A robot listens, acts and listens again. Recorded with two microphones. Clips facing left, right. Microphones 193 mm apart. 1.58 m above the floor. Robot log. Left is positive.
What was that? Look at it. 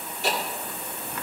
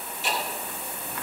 note: The ticking: about 65° left or 115° left.
cmd yaw +65
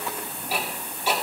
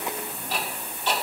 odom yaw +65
note: So it is at 10° left.
cmd yaw +10
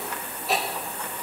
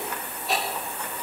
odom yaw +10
end: Found it: ticking, straight ahead, 2 to 4 m away.